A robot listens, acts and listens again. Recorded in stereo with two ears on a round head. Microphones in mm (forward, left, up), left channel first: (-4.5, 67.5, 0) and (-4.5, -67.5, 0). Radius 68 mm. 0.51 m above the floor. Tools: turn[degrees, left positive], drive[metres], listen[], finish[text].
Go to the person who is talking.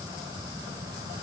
Action: listen[]
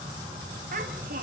Thought: The child speaking: about 55° right or 125° right.
Action: turn[-55]
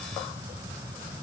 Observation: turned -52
Action: listen[]
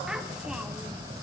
Action: drive[1.0]
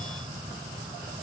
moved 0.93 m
Action: listen[]
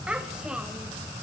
Action: drive[1.0]
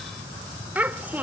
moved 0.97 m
Thought: The child speaking is now 15° right.
Action: turn[-15]
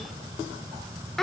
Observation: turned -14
Action: drive[1.0]
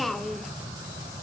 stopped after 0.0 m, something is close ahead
Action: finish[I am next to the child speaking.]